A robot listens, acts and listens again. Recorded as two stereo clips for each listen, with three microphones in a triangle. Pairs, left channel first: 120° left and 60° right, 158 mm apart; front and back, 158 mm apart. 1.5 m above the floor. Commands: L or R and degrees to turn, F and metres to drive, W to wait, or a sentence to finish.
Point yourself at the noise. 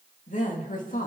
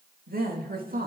L155
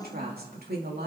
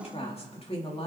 R55
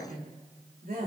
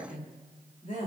R40
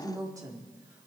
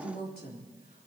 L10
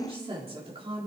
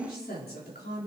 Found it: a woman speaking, straight ahead, 2 to 4 m away.